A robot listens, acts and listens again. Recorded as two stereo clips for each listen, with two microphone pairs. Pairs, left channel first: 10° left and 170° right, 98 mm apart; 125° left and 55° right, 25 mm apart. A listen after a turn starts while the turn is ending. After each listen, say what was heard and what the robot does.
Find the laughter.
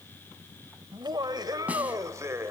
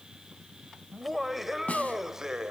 The laughter: 115° right. Turn 115° right.
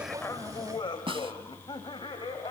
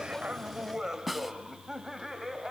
The laughter is now 25° left. Turn 25° left.
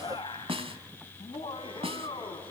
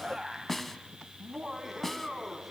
The laughter is now 25° left. Turn 25° left.
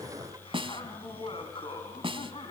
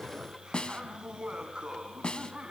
The laughter is now 10° right. Turn 10° right.
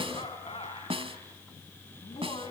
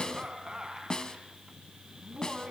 Facing the laughter, 2 to 4 m away.